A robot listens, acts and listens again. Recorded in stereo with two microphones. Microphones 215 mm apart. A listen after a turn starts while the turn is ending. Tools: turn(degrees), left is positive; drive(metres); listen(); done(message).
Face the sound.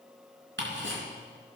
turn(degrees=-65)
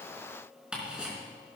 done("Facing the ticking, 2 to 4 m away.")